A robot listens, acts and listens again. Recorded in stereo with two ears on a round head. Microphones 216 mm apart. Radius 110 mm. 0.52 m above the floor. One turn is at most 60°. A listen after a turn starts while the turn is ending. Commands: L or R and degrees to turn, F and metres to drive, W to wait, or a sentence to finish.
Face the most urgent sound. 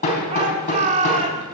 R30
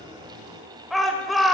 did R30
Found it: a shout, straight ahead, 1 to 2 m away.